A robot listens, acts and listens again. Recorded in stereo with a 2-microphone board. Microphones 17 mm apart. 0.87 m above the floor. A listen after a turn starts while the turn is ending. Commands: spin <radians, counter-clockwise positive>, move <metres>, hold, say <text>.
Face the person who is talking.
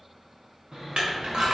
spin -0.26
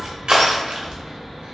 say Found it: a child speaking, straight ahead.